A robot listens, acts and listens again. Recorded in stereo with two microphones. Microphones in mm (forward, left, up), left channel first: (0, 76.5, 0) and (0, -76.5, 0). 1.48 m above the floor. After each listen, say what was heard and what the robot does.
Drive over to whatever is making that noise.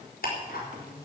Turn 90° left.
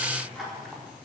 Drive 1.0 m forward.
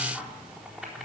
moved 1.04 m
Drive 1.0 m forward.
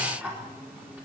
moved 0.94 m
The ticking is now 10° right. Turn 10° right.
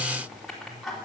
Drive 1.0 m forward.
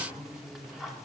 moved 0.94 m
Drive 1.0 m forward.
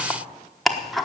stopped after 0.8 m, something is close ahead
Arrived at the ticking, straight ahead.